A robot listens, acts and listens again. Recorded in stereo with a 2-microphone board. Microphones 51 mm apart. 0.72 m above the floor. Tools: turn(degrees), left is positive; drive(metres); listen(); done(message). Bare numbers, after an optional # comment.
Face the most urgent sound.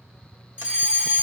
# The fire alarm: about 20° right or 160° right.
turn(-20)
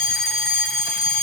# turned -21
done("Found it: a fire alarm, straight ahead.")